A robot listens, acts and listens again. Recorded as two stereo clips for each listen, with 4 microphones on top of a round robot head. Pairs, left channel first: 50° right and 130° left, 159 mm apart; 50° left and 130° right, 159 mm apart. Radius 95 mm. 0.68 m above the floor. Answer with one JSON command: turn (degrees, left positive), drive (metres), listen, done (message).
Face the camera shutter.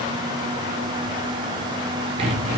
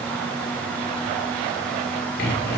{"listen": true}
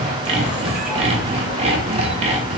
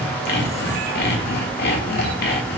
{"listen": true}
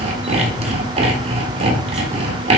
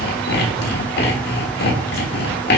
{"done": "I can't make out a camera shutter, only sawing."}